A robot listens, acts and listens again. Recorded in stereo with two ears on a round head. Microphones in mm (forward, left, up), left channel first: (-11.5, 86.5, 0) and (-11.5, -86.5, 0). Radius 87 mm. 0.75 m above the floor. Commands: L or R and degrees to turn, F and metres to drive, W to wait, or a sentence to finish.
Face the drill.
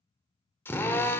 L30
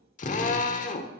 L140
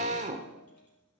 R35
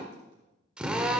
Found it: a drill, straight ahead.